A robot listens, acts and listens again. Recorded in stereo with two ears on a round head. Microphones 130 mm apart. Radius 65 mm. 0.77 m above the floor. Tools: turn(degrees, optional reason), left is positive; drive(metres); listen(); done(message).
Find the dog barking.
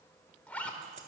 listen()
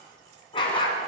turn(degrees=30, reason="The dog barking: about 30° left or 150° left.")
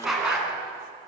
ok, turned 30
done("Facing the dog barking, 2 to 4 m away.")